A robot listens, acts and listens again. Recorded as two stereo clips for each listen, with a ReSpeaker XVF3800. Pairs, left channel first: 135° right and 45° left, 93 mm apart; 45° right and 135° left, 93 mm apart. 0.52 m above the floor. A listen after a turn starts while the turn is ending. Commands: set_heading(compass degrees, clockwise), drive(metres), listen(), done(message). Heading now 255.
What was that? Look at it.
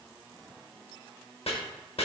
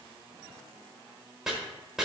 set_heading(35)
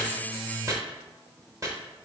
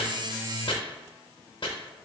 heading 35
set_heading(45)
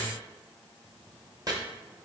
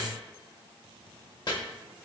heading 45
done("Facing the chopping.")